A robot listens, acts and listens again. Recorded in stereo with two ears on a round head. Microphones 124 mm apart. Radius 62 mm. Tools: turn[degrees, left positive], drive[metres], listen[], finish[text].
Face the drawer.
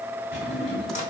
Thought: The drawer: about 55° left or 125° left.
Action: turn[55]
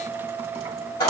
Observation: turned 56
Action: listen[]
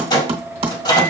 Action: listen[]
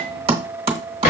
Thought: So it is at 70° left.
Action: turn[70]
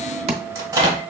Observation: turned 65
Action: listen[]
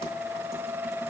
Action: listen[]
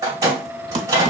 Action: finish[Facing where the drawer came from. I can't hear it now.]